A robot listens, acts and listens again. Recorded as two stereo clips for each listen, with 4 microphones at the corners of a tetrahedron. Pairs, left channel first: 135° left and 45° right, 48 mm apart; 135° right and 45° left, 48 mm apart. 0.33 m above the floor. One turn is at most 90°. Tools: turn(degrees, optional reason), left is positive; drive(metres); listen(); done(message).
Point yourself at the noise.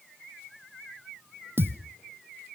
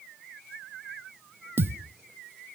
done("Found it: a thud, straight ahead.")